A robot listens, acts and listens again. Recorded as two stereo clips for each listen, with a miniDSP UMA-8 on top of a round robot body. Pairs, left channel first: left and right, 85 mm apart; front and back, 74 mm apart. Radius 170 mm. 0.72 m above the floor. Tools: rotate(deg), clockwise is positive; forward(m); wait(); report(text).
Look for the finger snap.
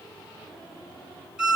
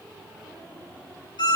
wait()
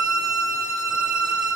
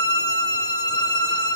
wait()
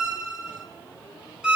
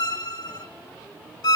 report("I can't make out a finger snap to turn to.")